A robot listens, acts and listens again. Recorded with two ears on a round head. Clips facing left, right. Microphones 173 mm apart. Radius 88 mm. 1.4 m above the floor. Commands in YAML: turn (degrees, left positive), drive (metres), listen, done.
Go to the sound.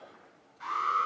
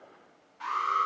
turn: -65
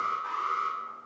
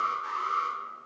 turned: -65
turn: -50
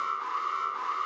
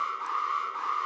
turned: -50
drive: 1.0
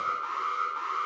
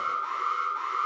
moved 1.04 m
drive: 1.0
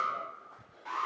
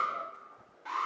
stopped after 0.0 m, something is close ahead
done: "I am next to the alarm."